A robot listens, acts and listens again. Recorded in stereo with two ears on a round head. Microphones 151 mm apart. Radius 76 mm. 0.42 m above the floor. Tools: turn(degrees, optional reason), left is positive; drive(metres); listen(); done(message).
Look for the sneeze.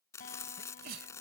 turn(degrees=-60, reason="The sneeze: about 60° right or 120° right.")
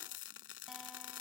listen()
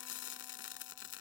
done("I heard a sneeze, but can't make it out now. It was about straight ahead or 60° right.")